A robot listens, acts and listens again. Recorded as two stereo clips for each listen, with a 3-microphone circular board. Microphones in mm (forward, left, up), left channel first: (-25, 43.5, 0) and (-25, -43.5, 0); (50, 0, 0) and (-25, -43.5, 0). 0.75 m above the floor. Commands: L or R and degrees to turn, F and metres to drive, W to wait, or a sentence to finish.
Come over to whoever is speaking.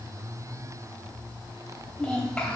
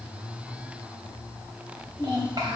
L170
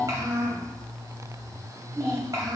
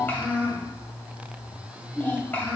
R40
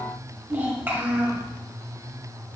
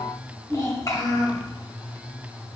R25
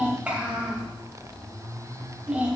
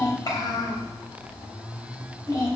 R15
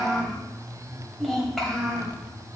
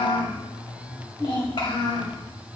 F1.0
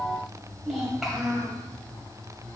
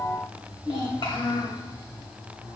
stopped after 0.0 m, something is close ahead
Something is in my way. I am facing the child speaking but have not reached it.